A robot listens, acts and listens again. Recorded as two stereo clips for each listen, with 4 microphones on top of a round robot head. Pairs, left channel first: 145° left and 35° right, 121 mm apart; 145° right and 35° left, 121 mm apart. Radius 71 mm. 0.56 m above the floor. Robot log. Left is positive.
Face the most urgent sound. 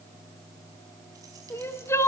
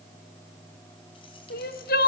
note: The crying: 145° right.
cmd yaw -145
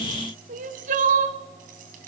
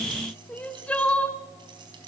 note: The crying is now 65° right.
cmd yaw -65
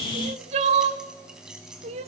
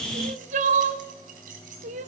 end: Found it: crying, straight ahead, 1 to 2 m away.